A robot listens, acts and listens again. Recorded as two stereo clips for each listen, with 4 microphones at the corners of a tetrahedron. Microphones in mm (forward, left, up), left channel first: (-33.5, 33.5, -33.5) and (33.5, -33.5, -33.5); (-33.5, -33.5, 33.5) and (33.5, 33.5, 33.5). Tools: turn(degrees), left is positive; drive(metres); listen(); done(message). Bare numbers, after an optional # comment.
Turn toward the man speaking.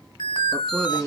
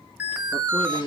# The man speaking: 135° right.
turn(-135)
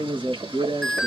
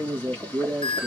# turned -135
# The man speaking is now 25° right.
turn(-25)
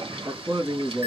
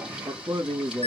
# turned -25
done("Facing the man speaking, 2 to 4 m away.")